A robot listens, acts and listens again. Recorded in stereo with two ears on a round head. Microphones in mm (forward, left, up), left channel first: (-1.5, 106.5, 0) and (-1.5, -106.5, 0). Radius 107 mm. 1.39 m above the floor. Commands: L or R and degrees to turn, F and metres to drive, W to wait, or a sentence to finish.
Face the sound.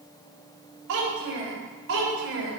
R55
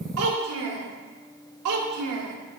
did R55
R70
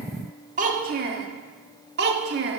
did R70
R45
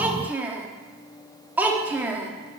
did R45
Found it: a child speaking, straight ahead.